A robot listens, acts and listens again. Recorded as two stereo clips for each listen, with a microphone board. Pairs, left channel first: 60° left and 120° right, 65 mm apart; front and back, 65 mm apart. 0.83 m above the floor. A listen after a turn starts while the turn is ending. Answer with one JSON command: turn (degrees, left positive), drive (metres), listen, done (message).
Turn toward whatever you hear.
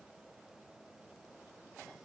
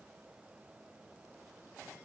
{"listen": true}
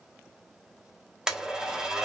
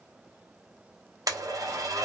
{"turn": 160}
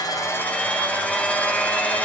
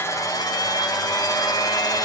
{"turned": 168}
{"turn": -10}
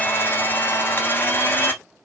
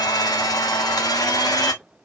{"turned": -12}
{"done": "Facing the blender."}